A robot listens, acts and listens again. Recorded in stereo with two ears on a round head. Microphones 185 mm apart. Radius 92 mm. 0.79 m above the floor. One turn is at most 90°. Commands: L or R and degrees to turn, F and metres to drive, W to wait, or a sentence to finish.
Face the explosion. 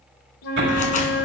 R60
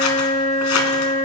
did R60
W
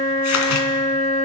I heard an explosion, but can't make it out now. It was about straight ahead or 60° right.